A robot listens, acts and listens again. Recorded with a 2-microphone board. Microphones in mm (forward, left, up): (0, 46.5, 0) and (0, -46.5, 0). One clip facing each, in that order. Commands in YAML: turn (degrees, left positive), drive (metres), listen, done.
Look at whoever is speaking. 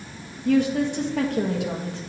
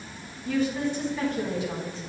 turn: 65
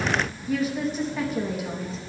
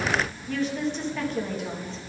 done: "Found it: a woman speaking, straight ahead, 1 to 2 m away."